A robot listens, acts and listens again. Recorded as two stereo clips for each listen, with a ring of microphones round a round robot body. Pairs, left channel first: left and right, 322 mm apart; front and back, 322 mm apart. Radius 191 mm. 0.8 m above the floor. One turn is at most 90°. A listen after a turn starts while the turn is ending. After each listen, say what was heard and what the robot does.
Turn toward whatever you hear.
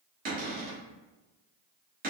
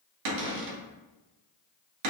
The cupboard door: 155° right. Turn 90° right.
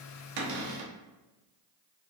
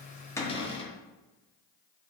The cupboard door is now 75° right. Turn 75° right.
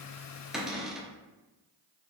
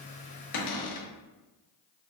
Facing the cupboard door.